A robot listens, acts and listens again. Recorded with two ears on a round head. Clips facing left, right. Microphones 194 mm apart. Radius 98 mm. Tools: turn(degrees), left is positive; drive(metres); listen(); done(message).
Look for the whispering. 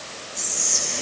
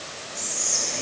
turn(degrees=30)
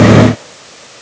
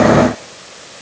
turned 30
listen()
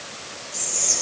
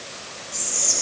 turn(degrees=-20)
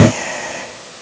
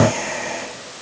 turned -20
done("Found it: whispering, straight ahead.")